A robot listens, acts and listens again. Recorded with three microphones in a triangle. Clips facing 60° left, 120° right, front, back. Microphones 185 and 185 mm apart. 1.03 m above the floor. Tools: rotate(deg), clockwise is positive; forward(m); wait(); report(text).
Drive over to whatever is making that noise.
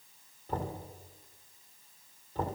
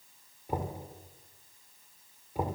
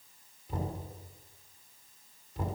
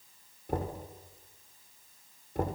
rotate(-165)
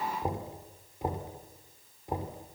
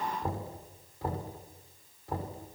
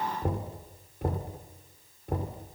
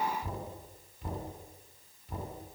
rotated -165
rotate(10)
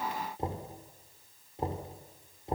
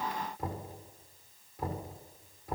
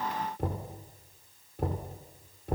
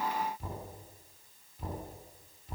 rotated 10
forward(1.0)
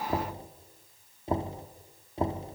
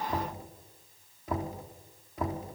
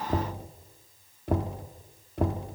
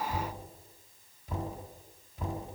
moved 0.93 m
forward(1.0)
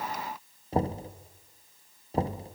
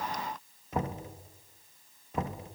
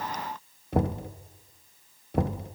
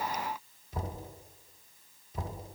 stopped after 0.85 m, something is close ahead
report("Arrived at the knocking, straight ahead.")